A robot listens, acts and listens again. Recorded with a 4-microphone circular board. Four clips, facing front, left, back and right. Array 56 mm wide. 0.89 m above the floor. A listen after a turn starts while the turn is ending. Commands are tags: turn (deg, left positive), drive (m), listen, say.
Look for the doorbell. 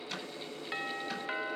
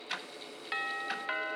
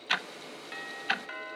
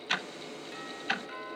<turn deg="75"/>
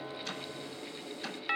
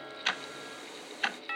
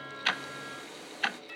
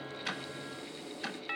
<say>Facing the doorbell, 1 to 2 m away.</say>